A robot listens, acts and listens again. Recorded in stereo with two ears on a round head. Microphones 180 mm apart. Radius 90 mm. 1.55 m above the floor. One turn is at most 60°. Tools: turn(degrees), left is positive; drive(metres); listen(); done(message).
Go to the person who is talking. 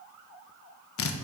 listen()
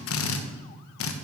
listen()
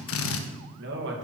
turn(degrees=-55)
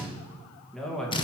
drive(metres=1.0)
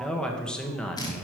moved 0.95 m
drive(metres=1.0)
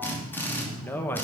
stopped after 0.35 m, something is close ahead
turn(degrees=10)
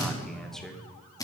done("I am next to the man speaking.")